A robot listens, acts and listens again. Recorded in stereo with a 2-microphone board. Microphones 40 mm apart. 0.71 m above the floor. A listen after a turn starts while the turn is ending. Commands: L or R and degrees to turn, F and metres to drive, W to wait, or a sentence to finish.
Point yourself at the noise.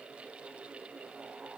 W
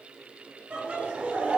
R40
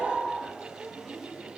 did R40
Facing the laughter, 1 to 2 m away.